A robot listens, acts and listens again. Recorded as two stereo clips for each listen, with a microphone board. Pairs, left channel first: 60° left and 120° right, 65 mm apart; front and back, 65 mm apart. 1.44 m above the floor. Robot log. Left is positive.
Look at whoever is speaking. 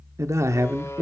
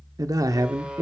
note: The man speaking: 160° right.
cmd yaw -160
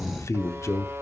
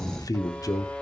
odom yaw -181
note: The man speaking is now 20° left.
cmd yaw +20
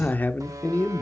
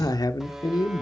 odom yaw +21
end: Found it: a man speaking, straight ahead.